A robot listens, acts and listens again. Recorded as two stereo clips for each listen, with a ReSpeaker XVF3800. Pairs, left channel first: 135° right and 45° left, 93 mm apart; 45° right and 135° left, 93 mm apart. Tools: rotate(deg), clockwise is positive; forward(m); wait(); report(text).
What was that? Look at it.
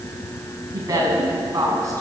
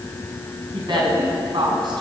rotate(-100)
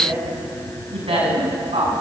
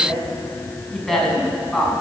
rotate(-40)
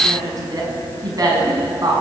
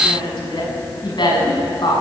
report("Facing the woman speaking, over 4 m away.")